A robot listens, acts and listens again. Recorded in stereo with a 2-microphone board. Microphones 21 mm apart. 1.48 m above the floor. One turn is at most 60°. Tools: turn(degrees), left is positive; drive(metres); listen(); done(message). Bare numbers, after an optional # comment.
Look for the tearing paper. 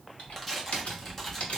turn(30)
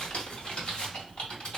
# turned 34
listen()
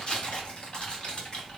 # So it is at 135° left.
turn(60)
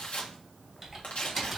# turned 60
# The tearing paper is now 75° left.
turn(60)
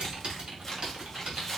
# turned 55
# Nothing new. It was at 20° left.
turn(20)
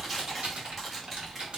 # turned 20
done("Found it: tearing paper, straight ahead.")